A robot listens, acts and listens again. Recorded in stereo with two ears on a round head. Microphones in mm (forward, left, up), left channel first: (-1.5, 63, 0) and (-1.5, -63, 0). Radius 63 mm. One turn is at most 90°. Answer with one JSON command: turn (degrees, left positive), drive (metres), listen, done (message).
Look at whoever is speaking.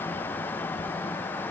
{"listen": true}
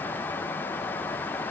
{"listen": true}
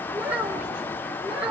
{"turn": -30}
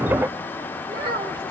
{"turn": -90}
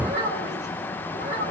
{"turn": -55}
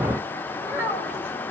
{"turn": -15}
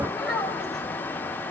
{"done": "Found it: a child speaking, straight ahead."}